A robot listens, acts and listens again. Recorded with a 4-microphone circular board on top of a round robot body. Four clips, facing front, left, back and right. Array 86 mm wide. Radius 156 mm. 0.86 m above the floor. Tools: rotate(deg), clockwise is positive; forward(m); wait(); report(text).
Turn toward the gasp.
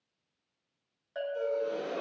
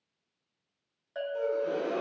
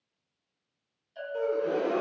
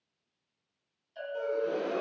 rotate(-175)
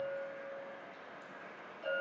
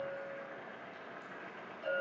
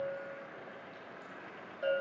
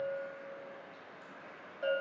report("Facing where the gasp came from. I can't hear it now.")